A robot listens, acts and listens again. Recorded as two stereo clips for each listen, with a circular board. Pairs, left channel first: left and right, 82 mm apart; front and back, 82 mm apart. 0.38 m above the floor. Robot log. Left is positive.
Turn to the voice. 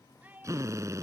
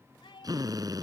note: The child speaking: 20° right.
cmd yaw -20
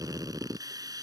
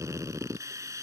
cmd idle
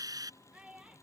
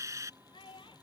note: The child speaking is now 10° right.
cmd yaw -10
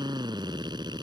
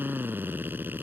cmd idle
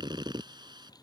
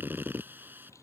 cmd idle
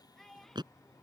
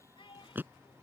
end: Found it: a child speaking, straight ahead.